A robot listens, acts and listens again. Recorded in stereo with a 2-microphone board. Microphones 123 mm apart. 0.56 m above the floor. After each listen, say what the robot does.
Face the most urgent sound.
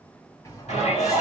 Turn 70° left.
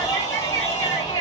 Turn 30° left.
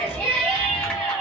Facing the shout, 2 to 4 m away.